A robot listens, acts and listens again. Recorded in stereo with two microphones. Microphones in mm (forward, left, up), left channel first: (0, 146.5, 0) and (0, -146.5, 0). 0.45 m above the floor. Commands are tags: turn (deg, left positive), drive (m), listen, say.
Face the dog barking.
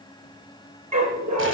<turn deg="-90"/>
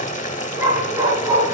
<turn deg="-15"/>
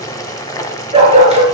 <turn deg="-25"/>
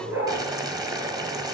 <say>Found it: a dog barking, straight ahead, 2 to 4 m away.</say>